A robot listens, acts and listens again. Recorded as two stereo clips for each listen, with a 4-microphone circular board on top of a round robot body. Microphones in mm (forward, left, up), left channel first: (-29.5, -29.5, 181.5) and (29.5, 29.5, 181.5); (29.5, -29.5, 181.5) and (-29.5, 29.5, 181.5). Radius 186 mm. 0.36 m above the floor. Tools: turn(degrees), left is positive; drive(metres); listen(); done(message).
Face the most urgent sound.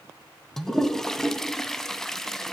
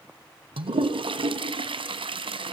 listen()
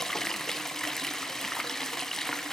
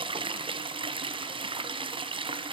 listen()
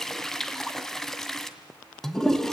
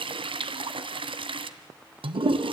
done("I can't make out anything urgent to turn to.")